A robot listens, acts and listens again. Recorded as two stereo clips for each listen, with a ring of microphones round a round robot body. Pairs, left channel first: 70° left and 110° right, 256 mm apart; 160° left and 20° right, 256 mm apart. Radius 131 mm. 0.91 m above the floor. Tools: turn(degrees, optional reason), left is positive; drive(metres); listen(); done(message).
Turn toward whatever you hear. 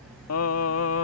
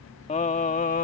turn(degrees=100, reason="The singing: 100° left.")
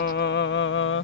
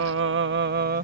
turn(degrees=30, reason="The singing is now 30° left.")
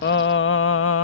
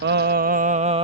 turn(degrees=45, reason="The singing is now 45° left.")
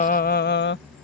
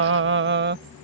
turn(degrees=25, reason="The singing is now 25° left.")
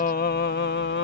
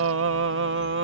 turn(degrees=20, reason="The singing is now 20° left.")
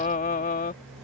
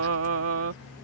turn(degrees=10, reason="The singing is now 10° left.")
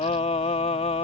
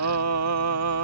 done("Facing the singing.")